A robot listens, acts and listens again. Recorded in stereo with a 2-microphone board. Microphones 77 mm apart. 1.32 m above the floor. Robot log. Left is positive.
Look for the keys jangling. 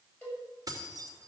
note: The keys jangling: about 50° right or 130° right.
cmd yaw -50
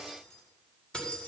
note: So it is at 15° left.
cmd yaw +15
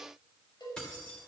note: The keys jangling is now 10° left.
cmd yaw +10
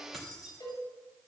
end: Facing the keys jangling.